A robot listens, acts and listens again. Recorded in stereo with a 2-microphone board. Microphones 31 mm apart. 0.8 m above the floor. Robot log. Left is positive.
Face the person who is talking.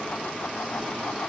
cmd idle
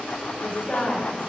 note: The woman speaking: about 35° left or 145° left.
cmd yaw +35
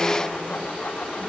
cmd idle
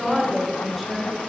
end: Found it: a woman speaking, straight ahead.